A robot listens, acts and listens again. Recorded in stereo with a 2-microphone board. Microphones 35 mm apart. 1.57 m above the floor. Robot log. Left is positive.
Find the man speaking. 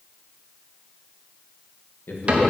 note: The man speaking: about 70° left or 110° left.
cmd yaw +70
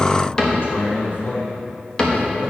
note: So it is at 80° left.
cmd yaw +80
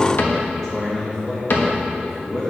note: The man speaking is now 15° left.
cmd yaw +15
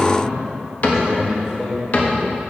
end: Found it: a man speaking, straight ahead.